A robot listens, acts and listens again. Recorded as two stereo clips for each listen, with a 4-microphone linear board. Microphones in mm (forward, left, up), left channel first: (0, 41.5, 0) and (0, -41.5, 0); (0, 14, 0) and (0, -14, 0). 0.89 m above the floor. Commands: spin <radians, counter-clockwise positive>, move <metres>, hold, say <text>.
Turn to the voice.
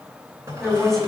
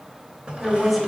spin 0.52
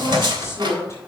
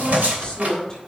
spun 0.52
spin 2.53
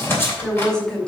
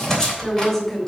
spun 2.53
spin 0.17
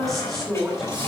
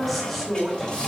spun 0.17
say Found it: a woman speaking, straight ahead, 2 to 4 m away.